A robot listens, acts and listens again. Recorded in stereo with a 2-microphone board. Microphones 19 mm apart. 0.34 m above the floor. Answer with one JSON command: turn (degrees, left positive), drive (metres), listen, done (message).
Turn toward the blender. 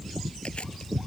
{"listen": true}
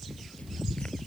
{"listen": true}
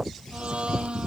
{"turn": -70}
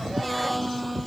{"done": "Found it: a blender, straight ahead."}